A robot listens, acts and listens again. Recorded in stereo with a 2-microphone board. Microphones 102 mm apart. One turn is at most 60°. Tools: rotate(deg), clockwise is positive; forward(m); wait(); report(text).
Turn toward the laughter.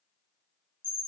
wait()
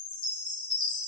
wait()
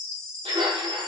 rotate(60)
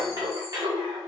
rotate(45)
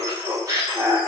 rotate(40)
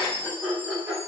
rotate(20)
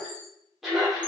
report("Facing the laughter.")